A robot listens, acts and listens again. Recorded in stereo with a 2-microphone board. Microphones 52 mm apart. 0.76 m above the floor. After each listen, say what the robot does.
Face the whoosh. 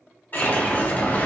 Turn 40° left.
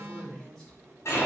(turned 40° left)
Turn 100° left.
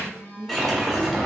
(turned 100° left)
Facing the whoosh.